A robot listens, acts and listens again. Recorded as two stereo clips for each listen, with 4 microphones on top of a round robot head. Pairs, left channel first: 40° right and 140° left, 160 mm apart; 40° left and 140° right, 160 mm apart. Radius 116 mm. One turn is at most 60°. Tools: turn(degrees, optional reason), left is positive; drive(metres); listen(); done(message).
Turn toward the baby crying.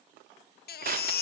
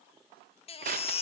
turn(degrees=-15, reason="The baby crying: 15° right.")
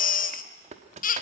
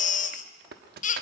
done("Facing the baby crying, under 1 m away.")